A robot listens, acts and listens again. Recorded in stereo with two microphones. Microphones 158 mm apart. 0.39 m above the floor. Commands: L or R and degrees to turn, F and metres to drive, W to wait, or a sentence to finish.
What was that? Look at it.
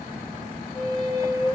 L35
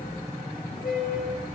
L110
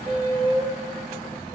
R35
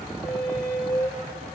Found it: a squeak, straight ahead.